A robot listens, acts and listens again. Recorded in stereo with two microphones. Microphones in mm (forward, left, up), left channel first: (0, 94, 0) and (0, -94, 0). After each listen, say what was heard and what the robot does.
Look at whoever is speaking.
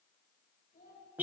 The child speaking: about 45° left or 135° left. Turn 45° left.
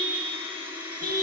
Keep listening.
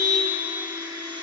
Keep listening.
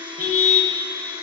I heard a child speaking, but can't make it out now. It was about straight ahead or 90° left.